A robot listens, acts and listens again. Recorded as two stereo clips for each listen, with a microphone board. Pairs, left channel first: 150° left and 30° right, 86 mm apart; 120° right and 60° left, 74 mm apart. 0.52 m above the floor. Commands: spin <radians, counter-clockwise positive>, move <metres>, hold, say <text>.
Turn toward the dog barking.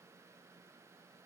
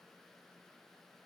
hold
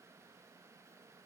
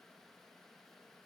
hold
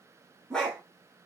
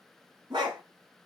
spin 1.13
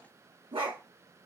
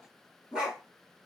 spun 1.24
spin -0.35
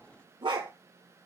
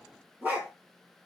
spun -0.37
spin -0.17
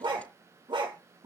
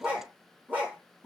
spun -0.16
say Found it: a dog barking, straight ahead, 2 to 4 m away.